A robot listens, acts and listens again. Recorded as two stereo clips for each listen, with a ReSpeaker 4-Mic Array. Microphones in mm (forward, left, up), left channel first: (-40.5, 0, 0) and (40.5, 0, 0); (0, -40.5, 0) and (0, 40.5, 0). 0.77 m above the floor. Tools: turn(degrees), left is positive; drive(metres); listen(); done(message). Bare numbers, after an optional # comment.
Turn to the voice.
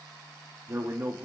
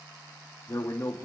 # The man speaking: 55° right.
turn(-55)
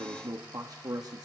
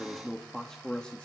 # The man speaking is now 20° right.
turn(-20)
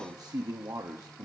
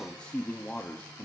# The man speaking is now 35° right.
turn(-35)
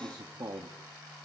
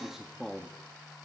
done("Found it: a man speaking, straight ahead, 1 to 2 m away.")